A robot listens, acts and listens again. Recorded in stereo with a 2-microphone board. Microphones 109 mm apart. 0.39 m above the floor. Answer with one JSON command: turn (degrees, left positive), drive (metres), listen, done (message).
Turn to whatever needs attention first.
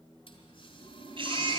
{"turn": -50}
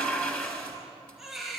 {"done": "Found it: a baby crying, straight ahead."}